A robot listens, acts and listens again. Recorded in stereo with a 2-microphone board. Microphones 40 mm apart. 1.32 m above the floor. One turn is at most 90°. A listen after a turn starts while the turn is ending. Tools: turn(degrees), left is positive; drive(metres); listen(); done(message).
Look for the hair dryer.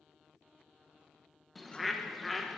listen()
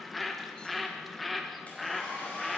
turn(degrees=35)
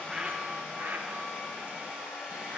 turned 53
turn(degrees=-15)
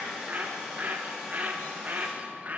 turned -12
done("Found it: a hair dryer, straight ahead.")